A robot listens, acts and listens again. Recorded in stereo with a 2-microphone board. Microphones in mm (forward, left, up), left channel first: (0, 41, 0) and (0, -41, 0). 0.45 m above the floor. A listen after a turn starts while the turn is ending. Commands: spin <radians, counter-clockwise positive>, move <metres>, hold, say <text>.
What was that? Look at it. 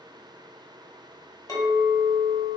spin 0.79
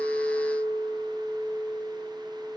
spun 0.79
spin 1.48
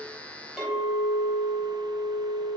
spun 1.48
say Facing the clink, 1 to 2 m away.